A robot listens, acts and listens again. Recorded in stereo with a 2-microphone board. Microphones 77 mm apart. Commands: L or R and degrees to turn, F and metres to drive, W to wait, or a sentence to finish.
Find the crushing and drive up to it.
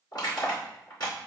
L60
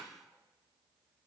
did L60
W
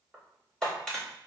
F1.0
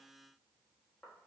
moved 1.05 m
W
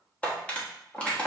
L20
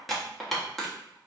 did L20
F1.0
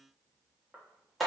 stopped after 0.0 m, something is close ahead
I am next to the crushing.